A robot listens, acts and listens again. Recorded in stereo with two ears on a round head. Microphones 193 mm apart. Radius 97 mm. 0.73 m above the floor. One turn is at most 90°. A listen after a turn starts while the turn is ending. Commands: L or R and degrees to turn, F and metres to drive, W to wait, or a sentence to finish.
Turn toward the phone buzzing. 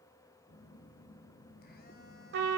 L45
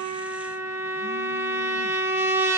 W
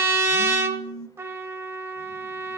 L85
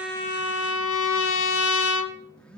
Found it: a phone buzzing, straight ahead.